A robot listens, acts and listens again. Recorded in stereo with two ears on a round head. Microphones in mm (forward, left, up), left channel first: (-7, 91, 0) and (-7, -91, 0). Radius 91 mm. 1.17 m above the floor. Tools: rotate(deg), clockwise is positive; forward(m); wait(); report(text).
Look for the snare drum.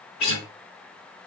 wait()
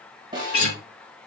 rotate(20)
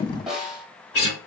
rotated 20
report("Found it: a snare drum, straight ahead.")